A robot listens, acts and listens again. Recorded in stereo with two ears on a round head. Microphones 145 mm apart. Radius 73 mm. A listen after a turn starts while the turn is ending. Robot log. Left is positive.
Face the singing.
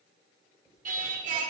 note: The singing: about 55° right or 125° right.
cmd yaw -55
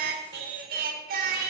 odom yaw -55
note: So it is at 65° right.
cmd yaw -65
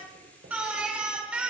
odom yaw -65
note: The singing is now 10° right.
cmd yaw -10
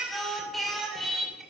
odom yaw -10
end: Facing the singing, 2 to 4 m away.